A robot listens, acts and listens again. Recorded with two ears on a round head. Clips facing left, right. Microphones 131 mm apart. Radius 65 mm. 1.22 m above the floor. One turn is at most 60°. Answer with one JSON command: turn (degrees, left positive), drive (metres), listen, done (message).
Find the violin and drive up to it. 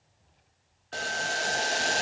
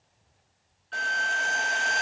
{"turn": -60}
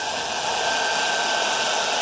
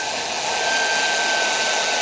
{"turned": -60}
{"listen": true}
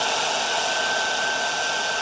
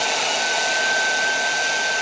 {"listen": true}
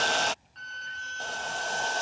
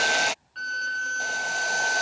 {"turn": -60}
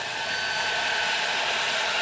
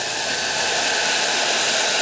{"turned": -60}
{"listen": true}
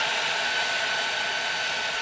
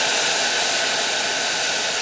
{"listen": true}
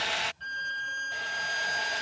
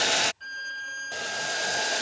{"drive": 1.0}
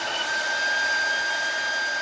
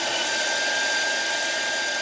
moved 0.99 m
{"drive": 1.0}
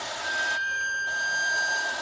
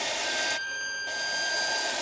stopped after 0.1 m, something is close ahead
{"turn": -10}
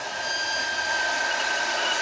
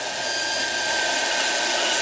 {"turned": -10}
{"done": "I am next to the violin."}